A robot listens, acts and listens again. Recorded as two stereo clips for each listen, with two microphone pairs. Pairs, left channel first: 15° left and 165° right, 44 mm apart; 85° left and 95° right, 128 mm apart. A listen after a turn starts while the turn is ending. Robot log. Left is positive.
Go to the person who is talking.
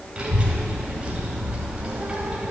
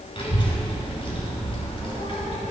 note: The child speaking: 130° left.
cmd yaw +130
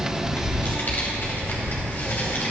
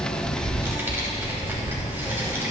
note: The child speaking is now 25° right.
cmd yaw -25
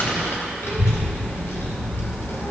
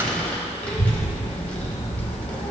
cmd fwd 1.0
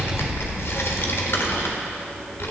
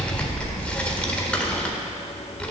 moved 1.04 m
cmd fwd 1.0
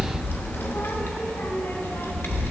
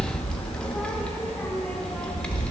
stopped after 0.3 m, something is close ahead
end: I am next to the child speaking.